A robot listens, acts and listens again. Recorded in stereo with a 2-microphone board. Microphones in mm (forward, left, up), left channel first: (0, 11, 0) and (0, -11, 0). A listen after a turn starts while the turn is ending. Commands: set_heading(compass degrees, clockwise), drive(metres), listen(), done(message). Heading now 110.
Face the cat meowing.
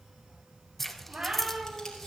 set_heading(170)
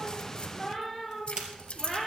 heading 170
done("Facing the cat meowing.")